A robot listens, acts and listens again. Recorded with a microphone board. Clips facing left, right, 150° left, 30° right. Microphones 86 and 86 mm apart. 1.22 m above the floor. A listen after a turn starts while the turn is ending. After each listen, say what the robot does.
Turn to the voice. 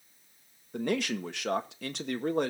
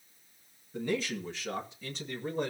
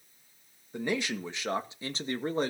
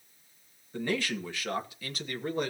Turn 95° left.
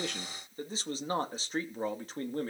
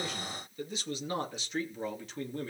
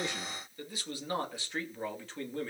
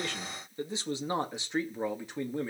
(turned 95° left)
Turn 45° left.
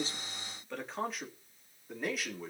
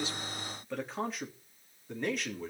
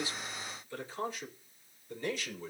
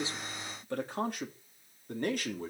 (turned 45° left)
Found it: a man speaking, straight ahead.